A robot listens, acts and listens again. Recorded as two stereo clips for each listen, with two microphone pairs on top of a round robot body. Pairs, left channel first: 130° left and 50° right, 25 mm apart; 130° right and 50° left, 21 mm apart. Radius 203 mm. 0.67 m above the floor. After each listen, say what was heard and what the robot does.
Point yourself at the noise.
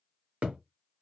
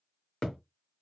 The thud: 75° right. Turn 75° right.
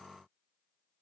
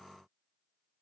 Facing where the thud came from. I can't hear it now.